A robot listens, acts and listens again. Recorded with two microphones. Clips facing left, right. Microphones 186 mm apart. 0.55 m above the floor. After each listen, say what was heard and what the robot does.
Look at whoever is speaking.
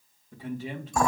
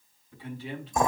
The man speaking: about 45° left or 135° left. Turn 45° left.
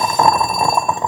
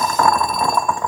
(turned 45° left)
Keep listening.
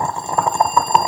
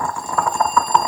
Keep listening.
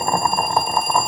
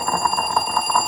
I heard a man speaking, but can't make it out now. It was about straight ahead or 90° left.